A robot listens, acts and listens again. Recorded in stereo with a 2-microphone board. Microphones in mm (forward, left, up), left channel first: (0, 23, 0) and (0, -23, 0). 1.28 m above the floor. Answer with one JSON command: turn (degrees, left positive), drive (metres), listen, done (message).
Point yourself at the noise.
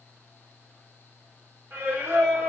{"turn": -50}
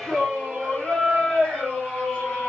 {"turn": 30}
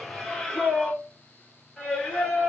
{"turn": 15}
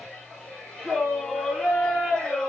{"done": "Facing the singing, 2 to 4 m away."}